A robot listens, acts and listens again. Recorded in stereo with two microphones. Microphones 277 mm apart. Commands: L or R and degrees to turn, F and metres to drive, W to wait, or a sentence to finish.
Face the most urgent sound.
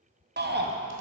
R35
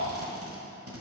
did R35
R105
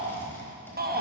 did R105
R35
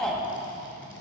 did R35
Facing the shout, under 1 m away.